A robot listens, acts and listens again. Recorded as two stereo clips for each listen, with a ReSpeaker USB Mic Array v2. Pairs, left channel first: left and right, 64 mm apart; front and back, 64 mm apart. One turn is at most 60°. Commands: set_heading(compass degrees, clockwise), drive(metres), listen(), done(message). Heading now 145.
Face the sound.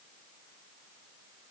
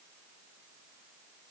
listen()
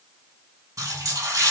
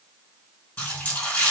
set_heading(205)
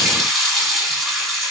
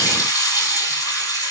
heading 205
done("Facing the running tap.")